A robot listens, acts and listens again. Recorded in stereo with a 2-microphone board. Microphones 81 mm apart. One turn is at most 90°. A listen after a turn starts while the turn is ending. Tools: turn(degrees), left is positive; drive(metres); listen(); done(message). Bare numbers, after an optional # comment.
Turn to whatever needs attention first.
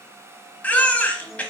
# The baby crying: about 15° left or 165° left.
turn(15)
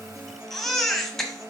done("Facing the baby crying, 1 to 2 m away.")